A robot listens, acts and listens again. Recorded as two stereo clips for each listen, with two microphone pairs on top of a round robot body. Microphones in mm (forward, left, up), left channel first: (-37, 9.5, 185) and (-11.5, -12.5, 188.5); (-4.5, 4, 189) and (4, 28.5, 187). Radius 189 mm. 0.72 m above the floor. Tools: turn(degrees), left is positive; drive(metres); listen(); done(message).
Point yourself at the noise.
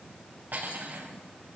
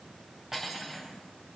done("Found it: cutlery clinking, straight ahead.")